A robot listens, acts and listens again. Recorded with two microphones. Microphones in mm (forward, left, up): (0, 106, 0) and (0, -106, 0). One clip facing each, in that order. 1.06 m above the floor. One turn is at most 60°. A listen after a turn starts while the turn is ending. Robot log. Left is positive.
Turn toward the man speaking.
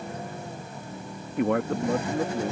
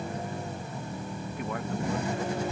note: The man speaking: about 70° left or 110° left.
cmd yaw +60
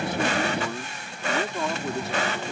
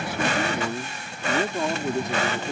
note: So it is at 15° right.
cmd yaw -15
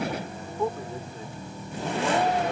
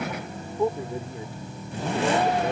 note: The man speaking is now 15° right.
cmd yaw -15
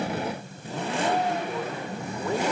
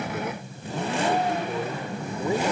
cmd idle
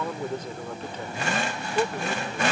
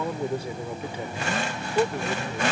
note: The man speaking is now 10° right.
cmd yaw -10
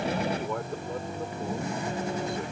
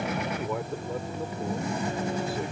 cmd idle
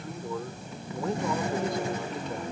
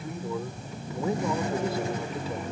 end: Found it: a man speaking, straight ahead.